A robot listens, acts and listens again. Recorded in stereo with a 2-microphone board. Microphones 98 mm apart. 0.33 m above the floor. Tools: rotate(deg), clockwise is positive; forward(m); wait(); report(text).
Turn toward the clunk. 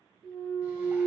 rotate(-30)
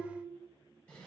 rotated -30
wait()
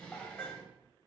report("I heard a clunk, but can't make it out now. It was about 15° right or 135° left.")